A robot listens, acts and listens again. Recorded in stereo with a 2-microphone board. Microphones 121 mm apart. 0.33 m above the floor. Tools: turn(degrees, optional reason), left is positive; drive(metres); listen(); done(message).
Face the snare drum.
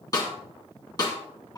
turn(degrees=30, reason="The snare drum: about 30° left or 150° left.")
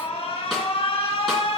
listen()
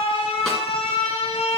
listen()
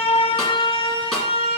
done("I heard a snare drum, but can't make it out now. It was about straight ahead or 120° left.")